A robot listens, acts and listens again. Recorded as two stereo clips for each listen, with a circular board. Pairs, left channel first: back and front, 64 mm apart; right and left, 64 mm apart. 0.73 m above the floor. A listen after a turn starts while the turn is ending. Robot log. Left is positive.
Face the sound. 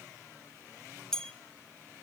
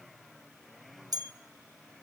note: The bell: 100° left.
cmd yaw +100
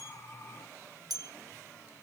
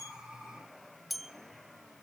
end: Facing the bell.